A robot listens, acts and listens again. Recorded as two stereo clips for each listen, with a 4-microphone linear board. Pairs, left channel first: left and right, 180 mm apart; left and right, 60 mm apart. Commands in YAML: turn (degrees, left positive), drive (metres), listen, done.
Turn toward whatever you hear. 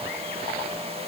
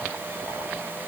listen: true
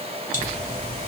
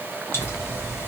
listen: true
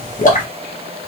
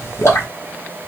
turn: 45
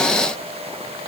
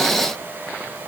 listen: true
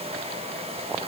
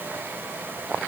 done: "I heard a pop, but can't make it out now. It was about straight ahead or 90° left."